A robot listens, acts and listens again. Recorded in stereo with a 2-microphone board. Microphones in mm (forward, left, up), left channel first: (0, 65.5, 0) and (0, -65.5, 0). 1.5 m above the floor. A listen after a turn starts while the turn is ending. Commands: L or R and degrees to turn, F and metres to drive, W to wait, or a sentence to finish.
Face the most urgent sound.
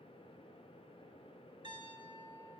W
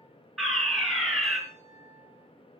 L30
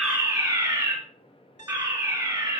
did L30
R30
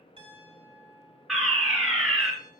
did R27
Found it: a fire alarm, straight ahead.